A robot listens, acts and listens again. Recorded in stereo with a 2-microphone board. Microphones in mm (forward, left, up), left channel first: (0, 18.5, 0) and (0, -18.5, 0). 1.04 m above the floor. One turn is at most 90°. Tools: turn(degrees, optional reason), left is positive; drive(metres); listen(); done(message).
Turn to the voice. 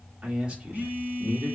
turn(degrees=-30, reason="The man speaking: about 30° right or 150° right.")
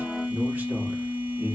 turn(degrees=-90, reason="So it is at 120° right.")
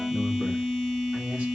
turn(degrees=-30, reason="Nothing new. It was at 30° right.")
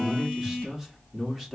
done("Found it: a man speaking, straight ahead.")